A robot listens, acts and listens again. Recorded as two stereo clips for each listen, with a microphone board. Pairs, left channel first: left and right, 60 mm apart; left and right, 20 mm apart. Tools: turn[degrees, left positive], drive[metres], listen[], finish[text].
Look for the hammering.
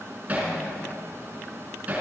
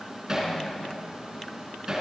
Thought: The hammering: about 25° right or 155° right.
Action: turn[-25]
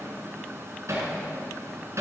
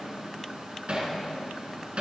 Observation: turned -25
Thought: So it is at 130° right.
Action: turn[-130]
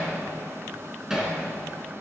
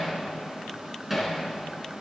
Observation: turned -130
Thought: The hammering is now 10° right.
Action: turn[-10]
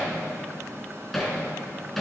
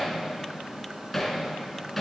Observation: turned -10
Action: finish[Found it: hammering, straight ahead.]